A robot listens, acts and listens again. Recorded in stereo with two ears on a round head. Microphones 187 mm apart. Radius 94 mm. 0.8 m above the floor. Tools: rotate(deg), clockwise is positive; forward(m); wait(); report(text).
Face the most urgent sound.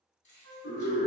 rotate(-40)
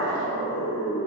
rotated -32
rotate(-100)
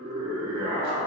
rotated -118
rotate(20)
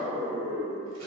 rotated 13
report("Found it: a scream, straight ahead.")